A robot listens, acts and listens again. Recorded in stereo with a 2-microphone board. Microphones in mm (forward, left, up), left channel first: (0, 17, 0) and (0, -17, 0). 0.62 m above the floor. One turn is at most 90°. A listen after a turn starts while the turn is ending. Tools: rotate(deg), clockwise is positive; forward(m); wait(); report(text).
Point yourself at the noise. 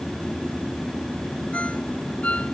rotate(-40)
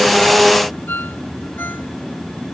rotate(-90)
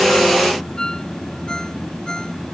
rotate(-20)
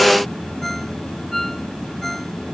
report("Facing the ringtone.")